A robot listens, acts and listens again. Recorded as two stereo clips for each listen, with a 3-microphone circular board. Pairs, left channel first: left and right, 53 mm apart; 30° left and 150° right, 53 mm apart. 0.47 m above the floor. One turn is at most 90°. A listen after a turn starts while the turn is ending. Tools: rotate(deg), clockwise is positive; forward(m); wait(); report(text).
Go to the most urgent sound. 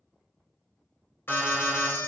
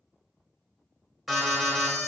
rotate(-90)
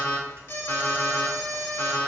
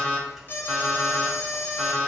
rotate(-65)
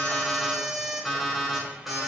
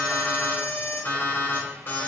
forward(1.0)
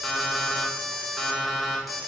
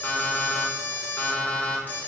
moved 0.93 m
forward(1.0)
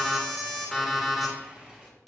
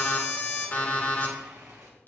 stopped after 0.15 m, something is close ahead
report("I am next to the alarm.")